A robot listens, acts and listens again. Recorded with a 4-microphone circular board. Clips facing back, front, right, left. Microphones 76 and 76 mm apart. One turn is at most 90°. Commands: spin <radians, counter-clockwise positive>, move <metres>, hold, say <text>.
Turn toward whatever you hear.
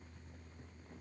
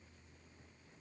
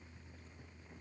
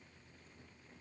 hold
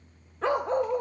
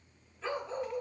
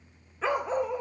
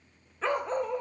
spin -1.57
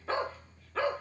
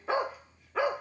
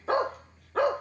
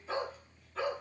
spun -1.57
spin -1.31
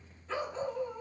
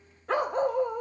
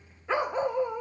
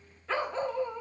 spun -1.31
spin -0.35
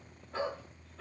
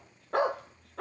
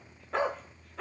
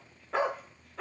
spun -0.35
say Found it: a dog barking, straight ahead, under 1 m away.